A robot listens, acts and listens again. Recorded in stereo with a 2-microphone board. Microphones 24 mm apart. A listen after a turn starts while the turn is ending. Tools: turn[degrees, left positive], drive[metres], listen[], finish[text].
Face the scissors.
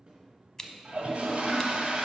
Thought: The scissors: about 25° left or 155° left.
Action: turn[25]
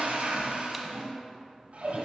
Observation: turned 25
Action: listen[]
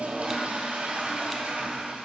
Action: listen[]
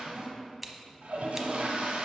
Action: finish[Found it: scissors, straight ahead, under 1 m away.]